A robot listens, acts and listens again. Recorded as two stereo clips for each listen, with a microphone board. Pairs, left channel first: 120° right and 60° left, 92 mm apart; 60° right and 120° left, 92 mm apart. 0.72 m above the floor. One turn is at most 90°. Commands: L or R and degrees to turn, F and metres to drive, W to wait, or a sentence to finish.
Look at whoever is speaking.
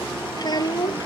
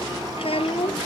R75
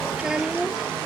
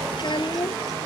R25
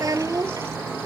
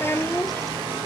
Found it: a child speaking, straight ahead.